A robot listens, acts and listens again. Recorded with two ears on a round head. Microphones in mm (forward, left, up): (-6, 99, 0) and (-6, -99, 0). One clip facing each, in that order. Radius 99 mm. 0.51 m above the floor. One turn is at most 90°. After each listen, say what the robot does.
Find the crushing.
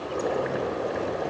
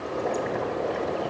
Keep listening.
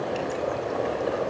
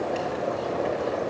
Keep listening.
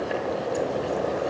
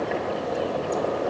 I can't make out crushing, only boiling.